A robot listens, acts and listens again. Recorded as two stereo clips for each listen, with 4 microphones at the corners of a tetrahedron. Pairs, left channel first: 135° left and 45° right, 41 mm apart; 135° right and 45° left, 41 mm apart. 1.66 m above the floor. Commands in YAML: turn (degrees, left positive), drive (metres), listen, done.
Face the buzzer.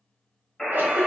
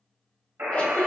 turn: 55
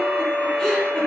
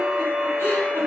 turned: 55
listen: true
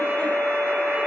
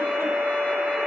listen: true
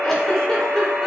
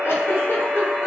done: "I heard a buzzer from this way, but can't make it out now."